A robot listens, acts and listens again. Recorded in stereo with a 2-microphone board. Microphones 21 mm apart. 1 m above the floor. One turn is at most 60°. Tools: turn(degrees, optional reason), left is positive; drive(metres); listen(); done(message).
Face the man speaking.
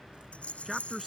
turn(degrees=-30)
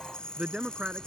turn(degrees=-60, reason="So it is at 145° right.")
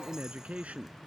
turn(degrees=-60, reason="The man speaking is now 85° right.")
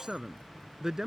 turn(degrees=-25, reason="The man speaking is now 25° right.")
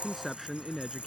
done("Found it: a man speaking, straight ahead.")